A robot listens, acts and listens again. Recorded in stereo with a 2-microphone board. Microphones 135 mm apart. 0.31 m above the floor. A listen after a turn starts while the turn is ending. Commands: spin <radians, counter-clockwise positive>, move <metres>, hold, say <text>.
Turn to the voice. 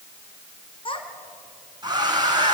spin 0.70
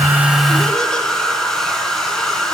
hold
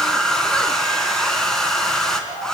hold
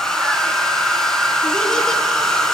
say I heard a child speaking, but can't make it out now. It was about straight ahead or 100° left.